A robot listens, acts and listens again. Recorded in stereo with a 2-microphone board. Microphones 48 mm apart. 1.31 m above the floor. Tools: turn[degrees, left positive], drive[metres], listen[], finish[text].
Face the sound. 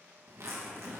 Thought: The zipper: about 70° right or 110° right.
Action: turn[-70]
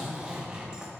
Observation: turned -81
Thought: So it is at 20° right.
Action: turn[-20]
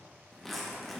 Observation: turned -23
Action: finish[Found it: a zipper, straight ahead.]